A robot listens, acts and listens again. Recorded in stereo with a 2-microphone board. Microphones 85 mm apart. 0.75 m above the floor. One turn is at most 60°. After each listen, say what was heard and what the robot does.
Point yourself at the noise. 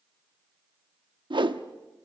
The whoosh: about 65° right or 115° right. Turn 60° right.
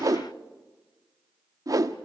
So it is at 45° right. Turn 45° right.
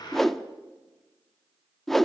Facing the whoosh.